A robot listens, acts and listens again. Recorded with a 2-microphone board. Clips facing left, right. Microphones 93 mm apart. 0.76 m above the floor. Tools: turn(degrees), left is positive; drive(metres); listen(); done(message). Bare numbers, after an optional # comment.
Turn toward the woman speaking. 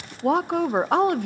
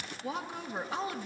# The woman speaking: about 60° left or 120° left.
turn(60)
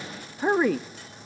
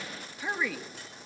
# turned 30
# So it is at 50° left.
turn(50)
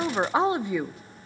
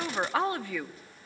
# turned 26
# The woman speaking is now 20° left.
turn(20)
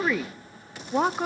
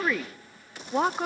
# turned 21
done("Facing the woman speaking, under 1 m away.")